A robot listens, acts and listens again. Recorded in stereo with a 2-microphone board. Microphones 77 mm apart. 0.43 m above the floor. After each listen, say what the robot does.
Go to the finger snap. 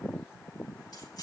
Keep listening.
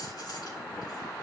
Keep listening.
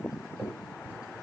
Turn 25° right.
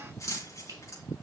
Keep listening.
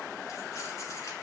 Keep listening.
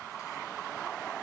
I heard a finger snap, but can't make it out now. It was about straight ahead or 130° right. I did not reach it.